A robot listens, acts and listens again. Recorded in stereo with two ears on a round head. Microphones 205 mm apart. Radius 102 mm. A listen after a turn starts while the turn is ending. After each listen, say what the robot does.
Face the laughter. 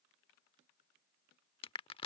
Keep listening.
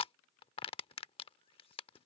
Keep listening.
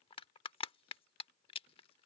I can't make out laughter to turn to.